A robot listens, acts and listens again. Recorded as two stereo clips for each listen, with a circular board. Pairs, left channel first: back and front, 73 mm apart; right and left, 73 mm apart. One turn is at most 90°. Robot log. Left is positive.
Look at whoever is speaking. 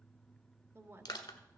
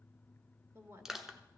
note: The woman speaking: 45° left.
cmd yaw +45
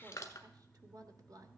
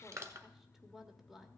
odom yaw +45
end: Found it: a woman speaking, straight ahead.